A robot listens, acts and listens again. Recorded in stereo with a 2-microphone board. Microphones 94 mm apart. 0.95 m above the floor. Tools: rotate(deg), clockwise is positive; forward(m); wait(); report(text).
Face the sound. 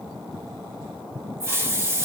rotate(25)
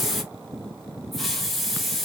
report("Facing the hiss, 1 to 2 m away.")